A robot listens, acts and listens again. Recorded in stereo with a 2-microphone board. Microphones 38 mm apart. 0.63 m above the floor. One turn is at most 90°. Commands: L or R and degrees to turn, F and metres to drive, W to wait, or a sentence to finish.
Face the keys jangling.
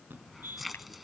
L30
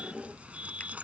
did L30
R35
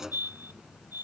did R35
R15
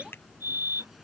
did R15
Found it: keys jangling, straight ahead.